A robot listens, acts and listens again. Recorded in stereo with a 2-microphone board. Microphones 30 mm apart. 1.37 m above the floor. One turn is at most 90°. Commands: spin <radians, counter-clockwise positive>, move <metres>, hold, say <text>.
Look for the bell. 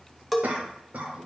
spin -0.52
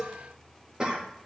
spin 0.44
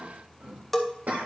say Found it: a bell, straight ahead.